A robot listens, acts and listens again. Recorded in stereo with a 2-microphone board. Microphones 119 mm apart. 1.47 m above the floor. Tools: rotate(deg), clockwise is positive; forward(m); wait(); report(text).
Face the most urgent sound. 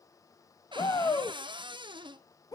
rotate(-30)
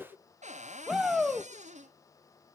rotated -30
report("Found it: a shout, straight ahead, 1 to 2 m away.")